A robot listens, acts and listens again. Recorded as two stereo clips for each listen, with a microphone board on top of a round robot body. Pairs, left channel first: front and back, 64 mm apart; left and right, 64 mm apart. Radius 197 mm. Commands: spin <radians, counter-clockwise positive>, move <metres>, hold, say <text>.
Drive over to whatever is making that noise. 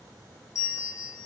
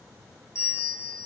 spin 0.70
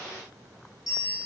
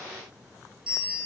spin -0.26
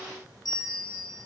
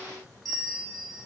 move 1.0
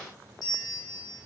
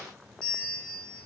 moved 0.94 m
move 1.0
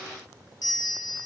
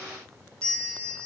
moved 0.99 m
spin 0.26
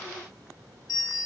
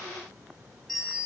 move 1.0
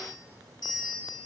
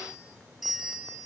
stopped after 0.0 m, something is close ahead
say Arrived at the bell, straight ahead.